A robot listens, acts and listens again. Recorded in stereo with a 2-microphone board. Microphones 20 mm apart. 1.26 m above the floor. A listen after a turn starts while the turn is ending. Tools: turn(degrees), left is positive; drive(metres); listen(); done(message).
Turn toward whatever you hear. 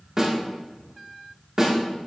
turn(degrees=-20)
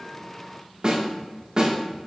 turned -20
turn(degrees=-140)
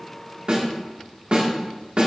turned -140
turn(degrees=-55)
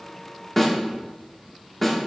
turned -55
done("Facing the snare drum.")